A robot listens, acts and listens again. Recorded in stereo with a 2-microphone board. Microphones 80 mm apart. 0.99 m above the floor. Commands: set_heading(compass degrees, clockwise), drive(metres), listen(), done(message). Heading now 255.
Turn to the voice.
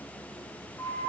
listen()
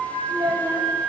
set_heading(345)
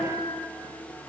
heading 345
listen()
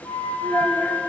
set_heading(330)
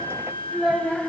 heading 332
done("Found it: a child speaking, straight ahead.")